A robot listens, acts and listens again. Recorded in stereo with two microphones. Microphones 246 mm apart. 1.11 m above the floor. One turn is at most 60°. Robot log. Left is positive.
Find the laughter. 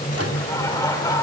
cmd yaw +30
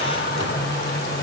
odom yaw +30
cmd idle
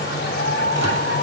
note: So it is at 140° left.
cmd yaw +60
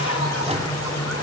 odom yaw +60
note: Nothing new. It was at 80° left.
cmd yaw +60
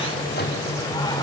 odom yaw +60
note: Nothing new. It was at 20° left.
cmd yaw +20
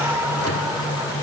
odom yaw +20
note: The laughter is now 10° right.
cmd yaw -10
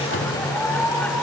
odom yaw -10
end: Facing the laughter, 2 to 4 m away.